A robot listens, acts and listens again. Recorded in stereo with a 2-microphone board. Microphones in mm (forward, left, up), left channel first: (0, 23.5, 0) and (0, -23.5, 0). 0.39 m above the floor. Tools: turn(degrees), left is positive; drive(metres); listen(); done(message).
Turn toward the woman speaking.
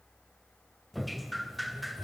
listen()
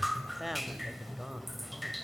turn(degrees=-30)
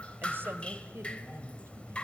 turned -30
turn(degrees=-125)
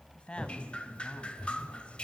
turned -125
turn(degrees=25)
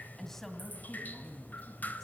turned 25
turn(degrees=10)
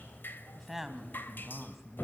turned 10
done("Found it: a woman speaking, straight ahead.")